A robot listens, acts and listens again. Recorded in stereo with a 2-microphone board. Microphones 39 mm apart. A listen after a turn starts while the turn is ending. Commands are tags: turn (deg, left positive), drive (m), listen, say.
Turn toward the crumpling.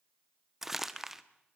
<turn deg="-30"/>
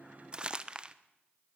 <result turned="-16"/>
<turn deg="-155"/>
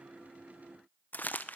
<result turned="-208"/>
<turn deg="50"/>
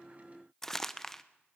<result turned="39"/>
<turn deg="10"/>
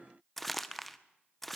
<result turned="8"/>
<say>Facing the crumpling, 1 to 2 m away.</say>